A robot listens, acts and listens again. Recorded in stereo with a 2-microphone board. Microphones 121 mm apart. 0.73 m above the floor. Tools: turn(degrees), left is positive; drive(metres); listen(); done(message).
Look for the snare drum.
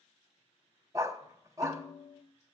turn(degrees=30)
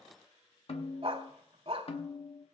turn(degrees=115)
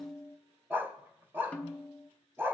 turn(degrees=15)
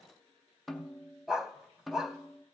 done("Found it: a snare drum, straight ahead, under 1 m away.")